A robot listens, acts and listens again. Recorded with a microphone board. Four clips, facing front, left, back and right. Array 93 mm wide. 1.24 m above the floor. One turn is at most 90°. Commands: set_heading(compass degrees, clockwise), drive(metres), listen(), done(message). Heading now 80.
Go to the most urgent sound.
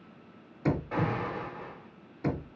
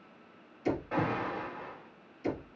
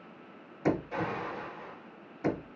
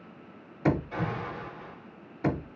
set_heading(25)
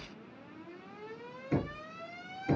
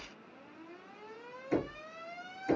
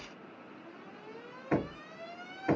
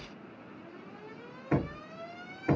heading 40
set_heading(25)
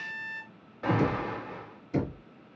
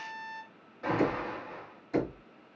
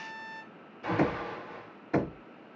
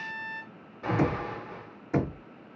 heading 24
drive(1.0)
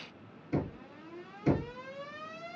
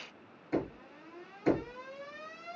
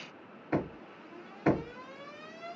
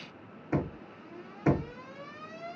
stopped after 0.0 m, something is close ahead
done("Blocked. The alarm is further on, straight ahead.")